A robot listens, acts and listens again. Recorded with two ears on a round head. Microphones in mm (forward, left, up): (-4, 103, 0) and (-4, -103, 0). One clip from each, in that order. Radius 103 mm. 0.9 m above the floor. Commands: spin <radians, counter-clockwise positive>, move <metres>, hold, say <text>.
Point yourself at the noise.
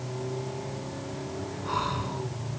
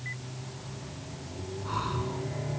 spin 0.26
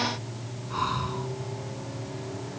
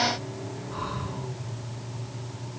spin 2.62
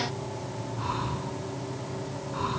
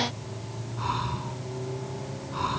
spin -0.26
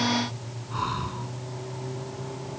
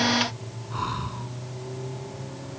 say Facing the breathing.